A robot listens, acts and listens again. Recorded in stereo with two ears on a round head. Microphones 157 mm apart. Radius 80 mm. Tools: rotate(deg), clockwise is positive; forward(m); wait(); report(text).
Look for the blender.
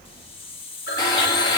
rotate(-25)
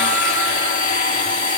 rotate(-130)
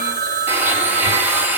rotate(10)
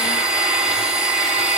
report("Facing the blender.")